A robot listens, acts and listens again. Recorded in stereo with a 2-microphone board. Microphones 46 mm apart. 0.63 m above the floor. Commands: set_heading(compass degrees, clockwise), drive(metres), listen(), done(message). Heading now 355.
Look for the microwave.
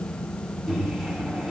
set_heading(25)
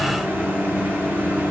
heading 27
set_heading(172)
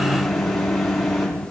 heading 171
done("Facing the microwave.")